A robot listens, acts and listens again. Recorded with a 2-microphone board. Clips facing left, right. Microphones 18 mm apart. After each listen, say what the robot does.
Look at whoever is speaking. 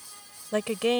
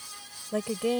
Turn 40° left.
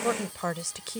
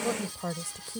Turn 90° left.
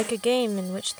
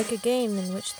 Turn 30° left.
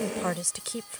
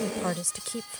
Turn 15° left.
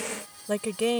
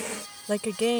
Facing the woman speaking.